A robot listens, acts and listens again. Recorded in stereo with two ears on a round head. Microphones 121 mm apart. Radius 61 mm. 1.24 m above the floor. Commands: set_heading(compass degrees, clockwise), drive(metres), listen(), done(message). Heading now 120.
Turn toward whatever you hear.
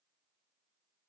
listen()
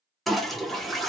set_heading(90)
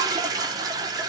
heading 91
set_heading(121)
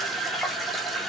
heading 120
done("Found it: a toilet flushing, straight ahead.")